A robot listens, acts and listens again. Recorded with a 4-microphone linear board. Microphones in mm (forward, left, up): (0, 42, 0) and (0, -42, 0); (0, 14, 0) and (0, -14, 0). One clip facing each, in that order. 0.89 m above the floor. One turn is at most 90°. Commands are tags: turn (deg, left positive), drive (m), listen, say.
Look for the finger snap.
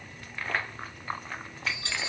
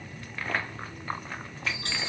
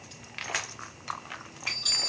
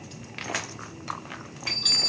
<listen/>
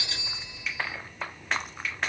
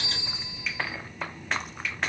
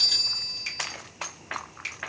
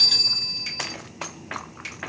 <turn deg="30"/>
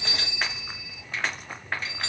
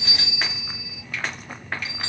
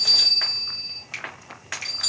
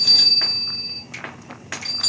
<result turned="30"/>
<turn deg="90"/>
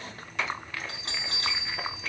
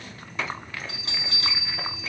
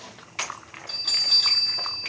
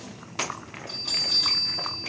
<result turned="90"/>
<turn deg="60"/>
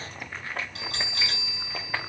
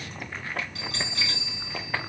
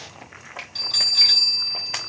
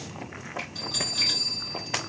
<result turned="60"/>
<listen/>
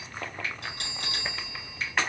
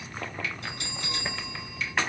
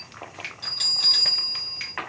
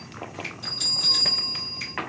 <turn deg="40"/>
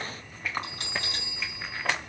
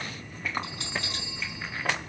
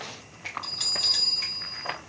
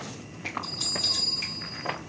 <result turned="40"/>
<listen/>
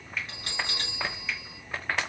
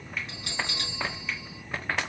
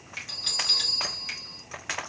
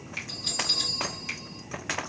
<say>Facing the finger snap.</say>